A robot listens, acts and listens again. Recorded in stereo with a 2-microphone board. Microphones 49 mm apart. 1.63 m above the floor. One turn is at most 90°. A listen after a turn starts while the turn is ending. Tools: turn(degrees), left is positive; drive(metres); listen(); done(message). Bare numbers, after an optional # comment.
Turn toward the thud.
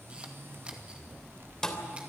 turn(30)
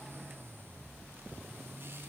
listen()
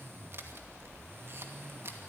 done("I heard a thud, but can't make it out now. It was about 20° right or 140° left.")